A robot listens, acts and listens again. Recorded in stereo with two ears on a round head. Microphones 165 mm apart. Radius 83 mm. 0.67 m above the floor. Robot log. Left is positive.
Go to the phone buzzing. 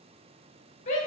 cmd idle
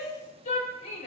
cmd idle
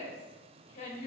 end: I can't make out a phone buzzing, only a shout.